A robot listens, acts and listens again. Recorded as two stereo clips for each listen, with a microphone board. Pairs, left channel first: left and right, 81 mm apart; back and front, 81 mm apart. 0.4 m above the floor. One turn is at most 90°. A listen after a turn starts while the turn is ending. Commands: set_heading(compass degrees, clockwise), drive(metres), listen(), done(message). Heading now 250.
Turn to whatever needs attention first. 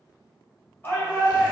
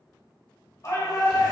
set_heading(160)
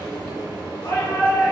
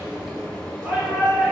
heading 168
set_heading(98)
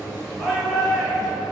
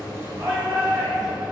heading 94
done("Facing the shout.")